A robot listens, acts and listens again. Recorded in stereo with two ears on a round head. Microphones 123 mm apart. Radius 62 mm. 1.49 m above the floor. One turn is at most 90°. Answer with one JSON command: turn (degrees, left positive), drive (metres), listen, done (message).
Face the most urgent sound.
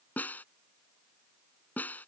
{"listen": true}
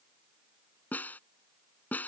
{"listen": true}
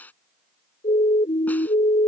{"turn": 45}
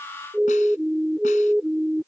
{"done": "Facing the siren."}